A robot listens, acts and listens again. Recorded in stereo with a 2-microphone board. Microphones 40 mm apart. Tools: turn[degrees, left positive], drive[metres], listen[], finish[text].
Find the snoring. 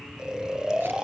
Thought: The snoring: about 15° right or 165° right.
Action: turn[-15]
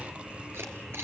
Action: listen[]
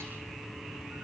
Action: listen[]
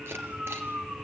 Thought: So it is at 150° right.
Action: turn[-150]
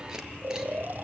Thought: The snoring is now 60° right.
Action: turn[-60]
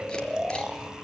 Thought: The snoring is now 20° right.
Action: turn[-20]
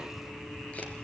Action: listen[]
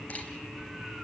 Action: listen[]
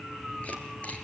Action: finish[I heard snoring from this way, but can't make it out now.]